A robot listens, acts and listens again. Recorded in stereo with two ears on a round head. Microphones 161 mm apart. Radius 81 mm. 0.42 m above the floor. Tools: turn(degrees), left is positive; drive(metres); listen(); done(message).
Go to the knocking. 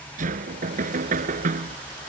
turn(degrees=-50)
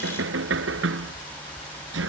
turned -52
turn(degrees=-80)
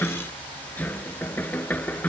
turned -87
turn(degrees=10)
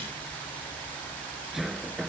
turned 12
drive(metres=1.0)
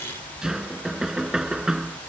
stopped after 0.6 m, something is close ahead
done("Blocked. The knocking is further on, straight ahead.")